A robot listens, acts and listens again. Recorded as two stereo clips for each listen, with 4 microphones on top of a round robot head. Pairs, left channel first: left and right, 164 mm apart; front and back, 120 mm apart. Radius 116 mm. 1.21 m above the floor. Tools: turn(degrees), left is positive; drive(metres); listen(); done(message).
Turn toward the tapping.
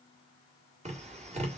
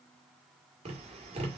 turn(degrees=-140)
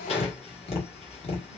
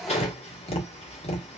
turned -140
turn(degrees=30)
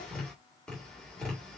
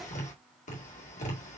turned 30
done("Facing the tapping.")